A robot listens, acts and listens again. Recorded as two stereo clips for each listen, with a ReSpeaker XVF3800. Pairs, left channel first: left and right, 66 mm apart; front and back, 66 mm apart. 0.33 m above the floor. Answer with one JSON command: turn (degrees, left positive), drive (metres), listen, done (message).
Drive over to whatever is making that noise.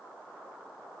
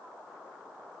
{"listen": true}
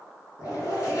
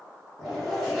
{"turn": 85}
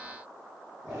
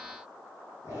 {"turn": -20}
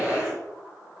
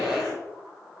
{"drive": 1.0}
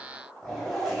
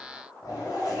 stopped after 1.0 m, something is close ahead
{"done": "Arrived at the zipper, straight ahead."}